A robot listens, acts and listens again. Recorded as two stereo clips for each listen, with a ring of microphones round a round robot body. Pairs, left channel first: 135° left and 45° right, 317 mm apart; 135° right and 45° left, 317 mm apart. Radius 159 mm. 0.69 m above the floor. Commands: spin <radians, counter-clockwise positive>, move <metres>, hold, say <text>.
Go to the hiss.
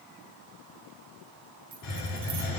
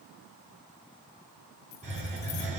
spin 2.01
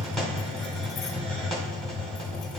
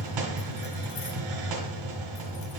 spin 0.79
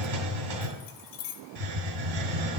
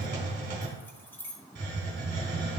spin -0.26
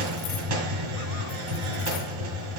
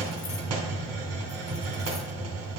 move 1.0
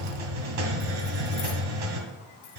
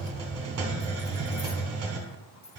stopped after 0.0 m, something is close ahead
say Something is in my way. I am facing the hiss but have not reached it.